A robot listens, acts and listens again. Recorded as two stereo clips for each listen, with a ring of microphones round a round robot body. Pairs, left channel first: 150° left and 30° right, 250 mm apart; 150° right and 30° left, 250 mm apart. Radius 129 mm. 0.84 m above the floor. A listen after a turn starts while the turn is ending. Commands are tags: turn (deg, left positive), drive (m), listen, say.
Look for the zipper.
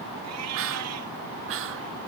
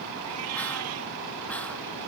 <listen/>
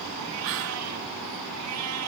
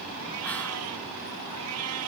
<listen/>
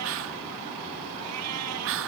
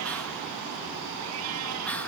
<say>I can't make out a zipper, only a cat meowing and whispering.</say>